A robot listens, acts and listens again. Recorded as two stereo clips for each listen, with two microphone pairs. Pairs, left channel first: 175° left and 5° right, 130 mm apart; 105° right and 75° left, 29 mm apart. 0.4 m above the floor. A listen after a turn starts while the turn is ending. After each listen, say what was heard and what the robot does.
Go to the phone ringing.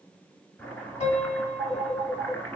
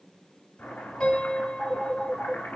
The phone ringing: 55° left. Turn 55° left.
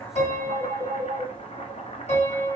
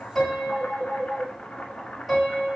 The phone ringing is now 15° left. Turn 15° left.
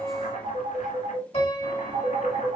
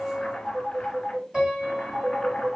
Drive 1.0 m forward.
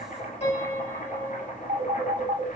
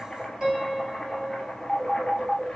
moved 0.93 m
Drive 1.0 m forward.
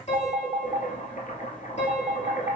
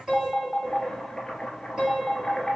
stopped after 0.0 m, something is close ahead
Arrived at the phone ringing, straight ahead.